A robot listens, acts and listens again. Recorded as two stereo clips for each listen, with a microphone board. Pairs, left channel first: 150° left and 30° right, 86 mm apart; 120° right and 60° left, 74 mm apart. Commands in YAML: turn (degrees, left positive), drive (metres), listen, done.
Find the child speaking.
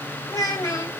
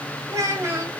turn: 110
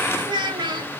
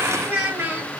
done: "Found it: a child speaking, straight ahead."